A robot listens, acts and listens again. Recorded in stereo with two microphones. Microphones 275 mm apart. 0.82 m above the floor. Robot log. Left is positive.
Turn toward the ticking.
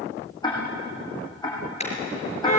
note: The ticking: about 15° left or 165° left.
cmd yaw +15
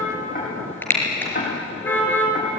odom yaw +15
note: So it is at 150° left.
cmd yaw +150
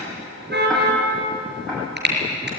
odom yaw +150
cmd idle
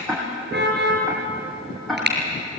end: Facing the ticking.